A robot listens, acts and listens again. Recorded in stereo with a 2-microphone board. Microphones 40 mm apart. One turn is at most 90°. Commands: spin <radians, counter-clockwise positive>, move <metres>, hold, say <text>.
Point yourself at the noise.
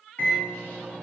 spin 1.13
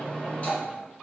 spin 0.87
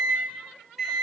say Found it: a microwave, straight ahead.